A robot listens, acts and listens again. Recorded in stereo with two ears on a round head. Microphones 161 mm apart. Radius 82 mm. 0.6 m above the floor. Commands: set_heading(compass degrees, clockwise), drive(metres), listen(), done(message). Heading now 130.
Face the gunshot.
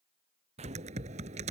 set_heading(170)
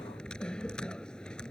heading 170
listen()
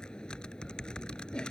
done("I heard a gunshot, but can't make it out now. It was about straight ahead or 100° right.")